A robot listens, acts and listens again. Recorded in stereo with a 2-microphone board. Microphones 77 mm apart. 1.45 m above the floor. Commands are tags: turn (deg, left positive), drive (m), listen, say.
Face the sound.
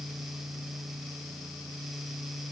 <listen/>
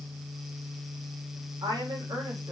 <turn deg="-55"/>
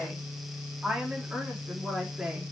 <turn deg="-10"/>
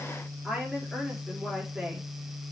<say>Found it: a woman speaking, straight ahead.</say>